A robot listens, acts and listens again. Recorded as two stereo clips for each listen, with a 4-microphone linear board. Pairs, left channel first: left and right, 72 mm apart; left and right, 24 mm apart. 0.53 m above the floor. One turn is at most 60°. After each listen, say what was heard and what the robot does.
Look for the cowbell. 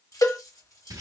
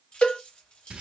The cowbell: about 55° left or 125° left. Turn 55° left.
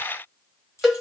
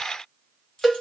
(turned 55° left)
Found it: a cowbell, straight ahead, under 1 m away.